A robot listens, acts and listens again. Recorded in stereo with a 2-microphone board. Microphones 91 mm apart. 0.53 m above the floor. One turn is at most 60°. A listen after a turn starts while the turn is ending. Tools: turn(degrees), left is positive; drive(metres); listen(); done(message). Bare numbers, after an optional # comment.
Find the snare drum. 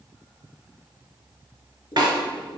# The snare drum: about 50° right or 130° right.
turn(-50)
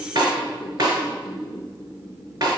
# So it is at 65° right.
turn(-60)
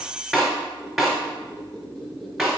# The snare drum is now 10° right.
turn(-10)
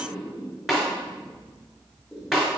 done("Facing the snare drum.")